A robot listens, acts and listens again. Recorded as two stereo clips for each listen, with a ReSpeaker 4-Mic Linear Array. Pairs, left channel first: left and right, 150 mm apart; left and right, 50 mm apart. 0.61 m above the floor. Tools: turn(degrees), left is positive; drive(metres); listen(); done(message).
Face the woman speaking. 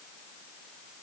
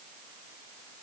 listen()
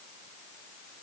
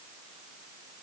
listen()
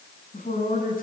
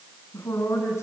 turn(degrees=70)
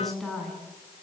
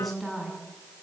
done("Facing the woman speaking.")